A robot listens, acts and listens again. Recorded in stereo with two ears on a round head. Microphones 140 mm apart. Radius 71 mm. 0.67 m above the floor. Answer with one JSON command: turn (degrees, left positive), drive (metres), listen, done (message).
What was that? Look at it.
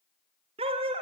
{"turn": -35}
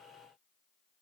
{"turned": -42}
{"listen": true}
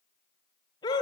{"turn": 25}
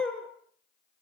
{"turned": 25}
{"done": "Facing the dog barking, 2 to 4 m away."}